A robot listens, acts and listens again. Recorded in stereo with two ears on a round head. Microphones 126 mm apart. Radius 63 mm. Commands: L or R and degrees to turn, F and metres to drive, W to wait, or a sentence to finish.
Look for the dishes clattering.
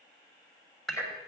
L30
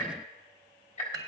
R30
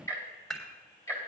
Found it: dishes clattering, straight ahead.